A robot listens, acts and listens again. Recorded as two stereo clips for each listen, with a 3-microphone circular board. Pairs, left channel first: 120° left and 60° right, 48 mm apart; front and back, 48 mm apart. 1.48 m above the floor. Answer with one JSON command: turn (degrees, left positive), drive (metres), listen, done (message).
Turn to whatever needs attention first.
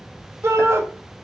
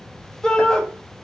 {"turn": -80}
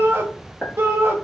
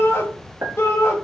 {"turn": -30}
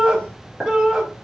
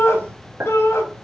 {"turn": 10}
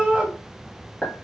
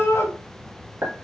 {"done": "Facing the shout."}